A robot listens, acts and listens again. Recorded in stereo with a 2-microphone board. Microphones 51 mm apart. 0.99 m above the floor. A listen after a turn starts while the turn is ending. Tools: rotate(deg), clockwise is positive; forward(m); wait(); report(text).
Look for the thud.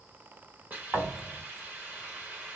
rotate(70)
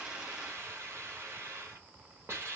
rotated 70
wait()
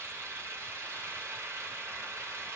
report("I heard a thud, but can't make it out now. It was about straight ahead or 40° right.")